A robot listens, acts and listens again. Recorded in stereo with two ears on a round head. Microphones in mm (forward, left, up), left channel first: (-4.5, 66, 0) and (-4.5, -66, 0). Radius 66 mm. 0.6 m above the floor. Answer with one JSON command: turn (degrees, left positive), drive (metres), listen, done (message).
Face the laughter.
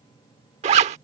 {"listen": true}
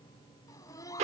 {"turn": 25}
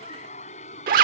{"turn": 125}
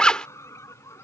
{"turn": 20}
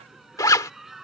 {"done": "Facing the laughter."}